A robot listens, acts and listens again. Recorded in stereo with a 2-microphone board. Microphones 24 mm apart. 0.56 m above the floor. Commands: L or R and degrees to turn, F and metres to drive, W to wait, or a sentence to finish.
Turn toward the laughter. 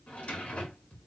W
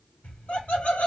L60
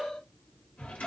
L35
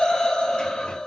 L30
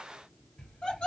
L35
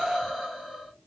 Found it: laughter, straight ahead, 1 to 2 m away.